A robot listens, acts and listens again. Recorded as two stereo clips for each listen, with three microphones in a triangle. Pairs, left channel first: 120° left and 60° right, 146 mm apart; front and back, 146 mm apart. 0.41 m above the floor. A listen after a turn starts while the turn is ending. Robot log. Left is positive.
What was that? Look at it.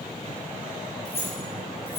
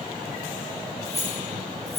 note: The keys jangling: 45° left.
cmd yaw +45
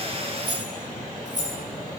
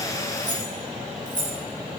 note: The keys jangling is now 30° right.
cmd yaw -30
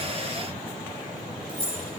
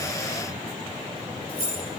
end: Facing the keys jangling, over 4 m away.